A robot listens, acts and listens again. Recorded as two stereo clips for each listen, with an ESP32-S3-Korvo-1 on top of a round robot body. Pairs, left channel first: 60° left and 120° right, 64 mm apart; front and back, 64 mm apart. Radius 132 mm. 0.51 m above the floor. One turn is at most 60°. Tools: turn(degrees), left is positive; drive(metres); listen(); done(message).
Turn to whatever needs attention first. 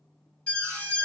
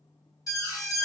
turn(degrees=-10)
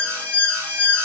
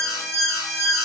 done("Found it: an alarm, straight ahead.")